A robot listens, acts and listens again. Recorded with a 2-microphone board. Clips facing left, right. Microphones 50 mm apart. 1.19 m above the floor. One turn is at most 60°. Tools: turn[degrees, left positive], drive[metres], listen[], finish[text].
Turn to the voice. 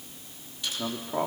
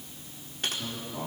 Thought: The man speaking: about 70° left or 110° left.
Action: turn[60]
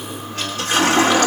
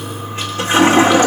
Action: listen[]
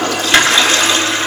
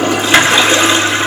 Action: listen[]
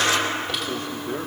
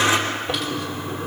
Action: finish[I heard a man speaking, but can't make it out now. It was about 10° left or 50° left.]